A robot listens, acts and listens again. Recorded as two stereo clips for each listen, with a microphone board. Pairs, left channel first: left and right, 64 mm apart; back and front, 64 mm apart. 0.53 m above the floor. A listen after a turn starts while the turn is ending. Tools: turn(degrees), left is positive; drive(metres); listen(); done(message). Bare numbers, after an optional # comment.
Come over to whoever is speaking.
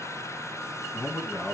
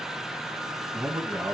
# The man speaking: 20° left.
turn(20)
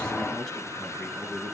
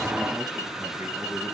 listen()
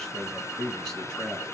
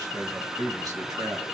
# The man speaking is now 10° left.
turn(10)
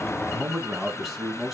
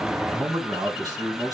drive(1.0)
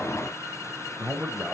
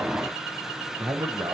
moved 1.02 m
# The man speaking is now 10° right.
turn(-10)
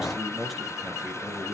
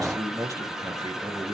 drive(1.0)
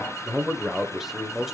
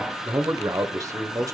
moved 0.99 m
drive(1.0)
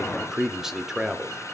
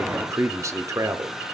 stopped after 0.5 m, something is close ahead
# The man speaking is now 10° right.
turn(-10)
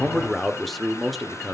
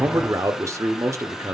done("I am next to the man speaking.")